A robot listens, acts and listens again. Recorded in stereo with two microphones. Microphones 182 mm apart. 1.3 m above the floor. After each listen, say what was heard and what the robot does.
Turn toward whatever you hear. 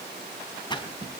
The splash: about 25° left or 155° left. Turn 25° left.
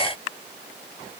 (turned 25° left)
Keep listening.
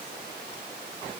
I heard a splash, but can't make it out now. It was about straight ahead or 130° left.